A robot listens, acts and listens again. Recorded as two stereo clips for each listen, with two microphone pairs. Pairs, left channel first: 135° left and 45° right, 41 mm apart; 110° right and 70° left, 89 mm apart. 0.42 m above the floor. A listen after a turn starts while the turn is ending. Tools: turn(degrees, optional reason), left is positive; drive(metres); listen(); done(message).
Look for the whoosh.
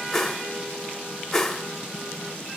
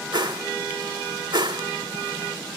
turn(degrees=55, reason="The whoosh: 55° left.")
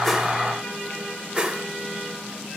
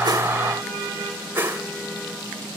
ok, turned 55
turn(degrees=10, reason="The whoosh is now 10° left.")
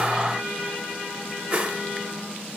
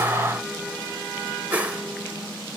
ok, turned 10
done("Found it: a whoosh, straight ahead, 1 to 2 m away.")